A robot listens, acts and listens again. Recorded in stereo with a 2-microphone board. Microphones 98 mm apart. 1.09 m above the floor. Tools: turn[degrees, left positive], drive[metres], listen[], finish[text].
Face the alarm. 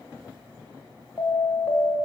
Thought: The alarm: about 25° left or 155° left.
Action: turn[25]
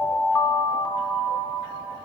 Thought: So it is at 130° left.
Action: turn[130]
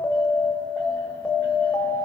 Thought: The alarm is now 40° left.
Action: turn[40]
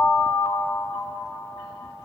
Thought: The alarm is now 10° left.
Action: turn[10]
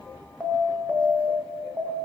Action: finish[Facing the alarm.]